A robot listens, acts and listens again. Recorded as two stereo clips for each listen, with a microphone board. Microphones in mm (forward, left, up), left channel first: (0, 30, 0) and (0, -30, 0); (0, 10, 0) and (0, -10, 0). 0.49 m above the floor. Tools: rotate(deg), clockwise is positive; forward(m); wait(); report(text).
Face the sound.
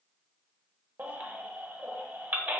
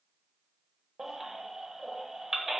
rotate(30)
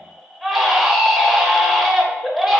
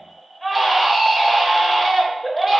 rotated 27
report("Found it: a baby crying, straight ahead.")